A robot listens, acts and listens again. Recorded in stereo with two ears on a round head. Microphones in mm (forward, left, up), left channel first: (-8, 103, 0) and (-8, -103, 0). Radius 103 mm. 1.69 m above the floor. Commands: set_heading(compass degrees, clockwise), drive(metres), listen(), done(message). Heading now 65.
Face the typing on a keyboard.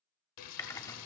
set_heading(35)
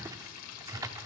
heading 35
set_heading(50)
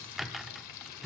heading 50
done("Facing the typing on a keyboard, under 1 m away.")